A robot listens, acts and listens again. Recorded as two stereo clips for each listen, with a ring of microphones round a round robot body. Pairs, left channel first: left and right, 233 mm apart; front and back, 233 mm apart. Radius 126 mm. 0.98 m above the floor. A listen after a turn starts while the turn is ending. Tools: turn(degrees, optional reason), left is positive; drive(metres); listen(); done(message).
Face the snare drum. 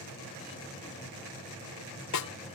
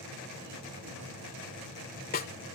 turn(degrees=60, reason="The snare drum: 60° left.")
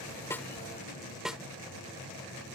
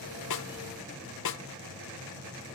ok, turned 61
done("Found it: a snare drum, straight ahead.")